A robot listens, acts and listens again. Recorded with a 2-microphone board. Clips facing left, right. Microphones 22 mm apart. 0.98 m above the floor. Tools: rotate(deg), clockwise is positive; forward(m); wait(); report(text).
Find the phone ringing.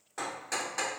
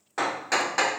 wait()
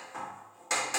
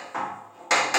wait()
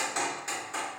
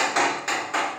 report("I can't make out a phone ringing to turn to.")